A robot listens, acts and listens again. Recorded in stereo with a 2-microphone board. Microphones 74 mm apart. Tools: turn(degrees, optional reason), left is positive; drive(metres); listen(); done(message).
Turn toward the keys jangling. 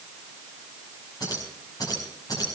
turn(degrees=55, reason="The keys jangling: about 55° left or 125° left.")
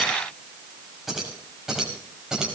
done("Found it: keys jangling, straight ahead.")